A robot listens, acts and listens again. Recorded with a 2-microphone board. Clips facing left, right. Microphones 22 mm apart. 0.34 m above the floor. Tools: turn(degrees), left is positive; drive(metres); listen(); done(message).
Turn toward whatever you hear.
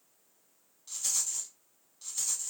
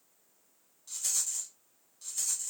turn(degrees=30)
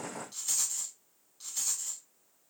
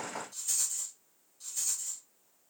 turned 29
turn(degrees=140)
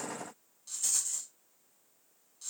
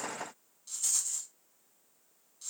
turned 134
done("Facing the rattle, under 1 m away.")